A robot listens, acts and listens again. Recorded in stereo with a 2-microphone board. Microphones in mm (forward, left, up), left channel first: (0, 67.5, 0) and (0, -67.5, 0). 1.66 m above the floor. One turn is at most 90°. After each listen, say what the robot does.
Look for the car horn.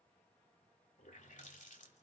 Keep listening.
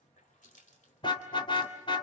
Turn 35° left.
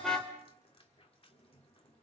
Found it: a car horn, straight ahead, 2 to 4 m away.